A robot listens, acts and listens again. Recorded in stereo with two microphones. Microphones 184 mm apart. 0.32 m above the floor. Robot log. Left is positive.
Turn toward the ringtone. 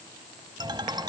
note: The ringtone: about 25° right or 155° right.
cmd yaw -25
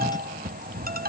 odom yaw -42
note: So it is at 110° right.
cmd yaw -110
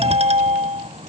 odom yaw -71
note: The ringtone is now 40° right.
cmd yaw -40
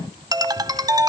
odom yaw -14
note: The ringtone is now 25° right.
cmd yaw -25
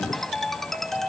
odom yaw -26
end: Facing the ringtone.